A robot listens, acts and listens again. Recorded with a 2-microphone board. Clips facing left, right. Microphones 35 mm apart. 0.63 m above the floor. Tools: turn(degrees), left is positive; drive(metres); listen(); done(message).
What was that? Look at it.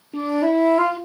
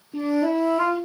turn(degrees=55)
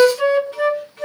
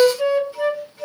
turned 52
turn(degrees=70)
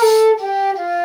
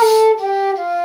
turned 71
done("Found it: a flute, straight ahead.")